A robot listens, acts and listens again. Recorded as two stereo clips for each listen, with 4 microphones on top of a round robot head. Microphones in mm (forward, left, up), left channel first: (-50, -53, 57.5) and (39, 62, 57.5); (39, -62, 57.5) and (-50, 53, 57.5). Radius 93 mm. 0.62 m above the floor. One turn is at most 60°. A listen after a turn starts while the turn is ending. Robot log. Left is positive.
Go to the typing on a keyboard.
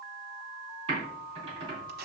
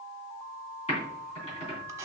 cmd fwd 1.0
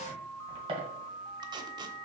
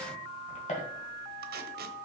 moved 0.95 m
cmd fwd 1.0
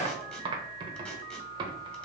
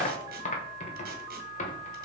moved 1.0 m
note: The typing on a keyboard is now 10° right.
cmd yaw -10
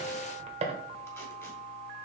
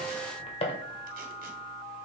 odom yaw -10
cmd fwd 1.0
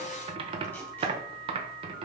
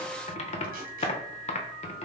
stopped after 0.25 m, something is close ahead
end: Arrived at the typing on a keyboard, straight ahead.